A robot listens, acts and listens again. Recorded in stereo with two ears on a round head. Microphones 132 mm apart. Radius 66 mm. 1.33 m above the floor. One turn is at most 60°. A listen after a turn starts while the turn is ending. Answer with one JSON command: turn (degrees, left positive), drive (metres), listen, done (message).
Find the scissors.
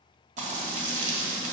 {"listen": true}
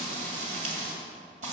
{"listen": true}
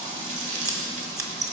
{"turn": -25}
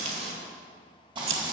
{"turn": -60}
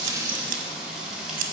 {"turn": -60}
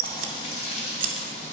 {"turn": -40}
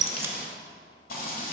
{"listen": true}
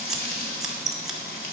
{"done": "Found it: scissors, straight ahead, 1 to 2 m away."}